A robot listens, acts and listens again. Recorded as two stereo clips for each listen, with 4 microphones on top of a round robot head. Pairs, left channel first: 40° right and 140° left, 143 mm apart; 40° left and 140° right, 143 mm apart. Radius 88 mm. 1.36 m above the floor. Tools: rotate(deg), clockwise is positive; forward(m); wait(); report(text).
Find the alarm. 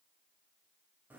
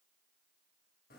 wait()
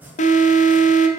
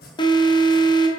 rotate(15)
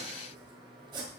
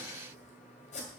wait()
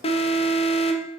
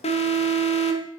report("Facing the alarm.")